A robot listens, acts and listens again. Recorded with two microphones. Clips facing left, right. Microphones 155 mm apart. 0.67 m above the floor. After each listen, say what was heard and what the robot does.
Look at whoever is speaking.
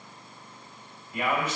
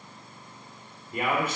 The man speaking: about 50° right or 130° right. Turn 50° right.
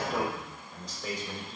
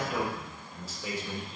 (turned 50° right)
Found it: a man speaking, straight ahead, 2 to 4 m away.